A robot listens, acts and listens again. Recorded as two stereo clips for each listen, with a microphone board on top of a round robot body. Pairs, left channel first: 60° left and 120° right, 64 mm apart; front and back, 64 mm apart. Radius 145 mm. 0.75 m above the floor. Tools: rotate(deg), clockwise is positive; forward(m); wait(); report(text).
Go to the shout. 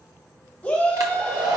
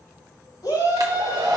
rotate(10)
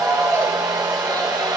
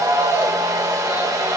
forward(1.0)
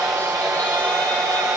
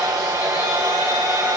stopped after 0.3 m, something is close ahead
wait()
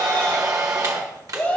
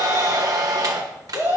report("Blocked. The shout is further on, straight ahead.")